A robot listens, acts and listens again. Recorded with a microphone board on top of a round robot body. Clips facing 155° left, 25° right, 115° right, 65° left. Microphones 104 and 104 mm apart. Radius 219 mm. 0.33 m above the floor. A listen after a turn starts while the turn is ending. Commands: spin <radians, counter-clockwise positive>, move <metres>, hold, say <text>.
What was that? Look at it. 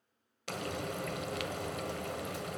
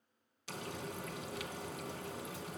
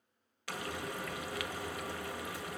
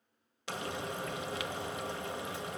spin 2.36
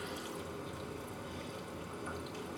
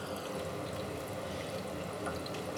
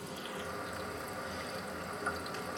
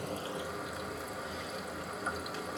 spin -0.35
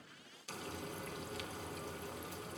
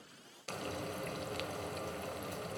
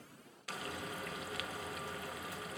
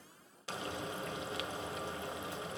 say Facing the frying, 1 to 2 m away.